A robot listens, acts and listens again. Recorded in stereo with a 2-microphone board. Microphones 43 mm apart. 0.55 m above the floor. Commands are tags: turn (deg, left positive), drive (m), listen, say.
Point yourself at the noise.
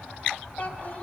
<turn deg="35"/>
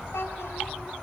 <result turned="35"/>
<turn deg="110"/>
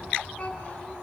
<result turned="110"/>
<turn deg="30"/>
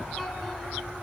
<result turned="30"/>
<listen/>
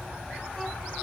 <listen/>
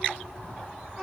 <say>Facing the child speaking, over 4 m away.</say>